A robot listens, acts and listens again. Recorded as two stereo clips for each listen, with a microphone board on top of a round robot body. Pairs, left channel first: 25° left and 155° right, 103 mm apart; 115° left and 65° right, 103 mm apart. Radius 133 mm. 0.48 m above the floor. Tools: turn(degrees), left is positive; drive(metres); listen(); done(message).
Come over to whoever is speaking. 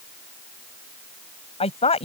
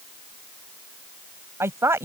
drive(metres=1.0)
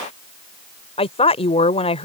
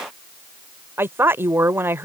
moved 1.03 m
drive(metres=1.0)
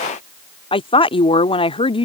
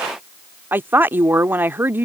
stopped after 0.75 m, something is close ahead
done("I am next to the woman speaking.")